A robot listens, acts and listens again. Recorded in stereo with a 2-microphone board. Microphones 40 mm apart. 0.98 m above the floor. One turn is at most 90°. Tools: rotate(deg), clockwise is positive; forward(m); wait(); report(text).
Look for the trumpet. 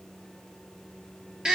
wait()
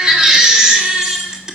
wait()
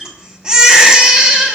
report("I can't make out a trumpet to turn to.")